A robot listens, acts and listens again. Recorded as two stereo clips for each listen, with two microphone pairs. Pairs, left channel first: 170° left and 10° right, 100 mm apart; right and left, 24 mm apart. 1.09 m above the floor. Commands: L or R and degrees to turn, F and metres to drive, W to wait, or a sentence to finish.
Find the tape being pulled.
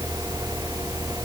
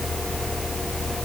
W
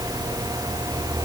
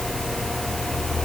W
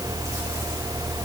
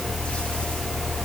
I can't make out tape being pulled.